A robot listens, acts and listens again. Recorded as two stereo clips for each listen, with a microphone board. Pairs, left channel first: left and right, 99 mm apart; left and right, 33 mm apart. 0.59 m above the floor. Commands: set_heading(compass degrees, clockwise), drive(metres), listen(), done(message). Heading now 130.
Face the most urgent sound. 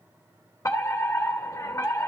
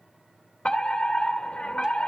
set_heading(100)
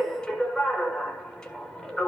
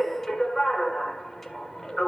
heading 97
done("Found it: a fire alarm, straight ahead, 2 to 4 m away.")